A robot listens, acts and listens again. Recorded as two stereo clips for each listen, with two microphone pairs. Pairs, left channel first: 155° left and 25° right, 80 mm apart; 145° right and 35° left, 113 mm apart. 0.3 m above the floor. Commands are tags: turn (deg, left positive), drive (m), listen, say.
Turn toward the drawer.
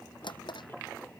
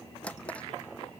<turn deg="140"/>
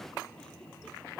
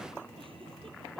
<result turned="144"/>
<listen/>
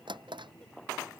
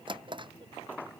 <say>Found it: a drawer, straight ahead.</say>